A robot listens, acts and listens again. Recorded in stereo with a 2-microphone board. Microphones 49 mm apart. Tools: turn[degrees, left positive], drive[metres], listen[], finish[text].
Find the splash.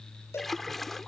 Action: turn[30]
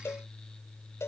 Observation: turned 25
Action: listen[]
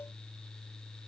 Action: finish[I heard a splash, but can't make it out now. It was about 20° right or 150° left.]